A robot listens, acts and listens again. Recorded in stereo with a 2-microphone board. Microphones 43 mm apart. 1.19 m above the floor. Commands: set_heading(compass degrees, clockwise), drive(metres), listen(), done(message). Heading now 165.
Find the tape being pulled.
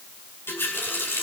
listen()
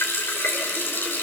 listen()
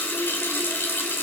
done("I can't make out tape being pulled to turn to.")